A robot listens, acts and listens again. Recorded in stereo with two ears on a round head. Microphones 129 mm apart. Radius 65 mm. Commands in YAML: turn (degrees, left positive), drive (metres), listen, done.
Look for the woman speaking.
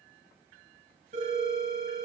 listen: true
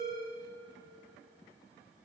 listen: true
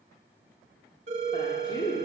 turn: 30
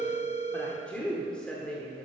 done: "Facing the woman speaking."